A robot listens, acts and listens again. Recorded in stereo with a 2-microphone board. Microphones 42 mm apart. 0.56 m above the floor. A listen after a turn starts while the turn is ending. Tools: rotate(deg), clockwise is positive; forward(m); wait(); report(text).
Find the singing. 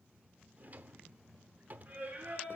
rotate(40)
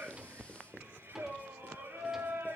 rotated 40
rotate(115)
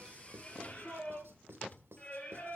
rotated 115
rotate(-25)
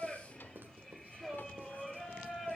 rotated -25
report("Facing the singing, over 4 m away.")